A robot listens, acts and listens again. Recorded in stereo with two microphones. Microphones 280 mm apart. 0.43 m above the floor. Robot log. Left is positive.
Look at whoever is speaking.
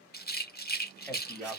cmd yaw +30
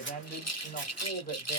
note: So it is at 145° left.
cmd yaw +145
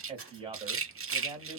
note: The man speaking is now 20° right.
cmd yaw -20
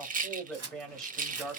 end: Facing the man speaking.